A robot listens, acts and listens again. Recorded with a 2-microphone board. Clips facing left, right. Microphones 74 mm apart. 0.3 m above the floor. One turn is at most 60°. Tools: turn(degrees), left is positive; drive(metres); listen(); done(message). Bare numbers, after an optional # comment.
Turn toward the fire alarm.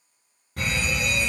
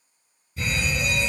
# The fire alarm: about 60° left or 120° left.
turn(60)
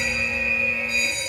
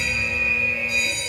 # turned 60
# So it is at 40° left.
turn(40)
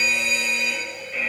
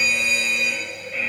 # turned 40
done("Found it: a fire alarm, straight ahead.")